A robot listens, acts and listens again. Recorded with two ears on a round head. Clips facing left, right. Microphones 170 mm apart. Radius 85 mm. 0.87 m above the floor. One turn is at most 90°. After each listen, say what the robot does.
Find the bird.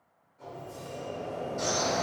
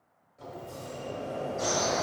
Turn 70° left.
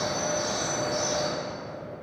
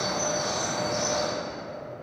Found it: a bird, straight ahead.